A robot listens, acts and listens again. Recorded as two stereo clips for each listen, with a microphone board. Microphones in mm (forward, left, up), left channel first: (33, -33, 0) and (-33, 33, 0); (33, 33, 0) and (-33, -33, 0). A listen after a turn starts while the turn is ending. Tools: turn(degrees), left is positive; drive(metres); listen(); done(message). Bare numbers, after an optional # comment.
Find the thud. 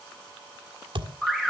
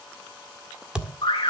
# The thud: 145° left.
turn(145)
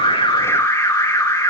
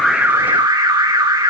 done("I heard a thud from this way, but can't make it out now.")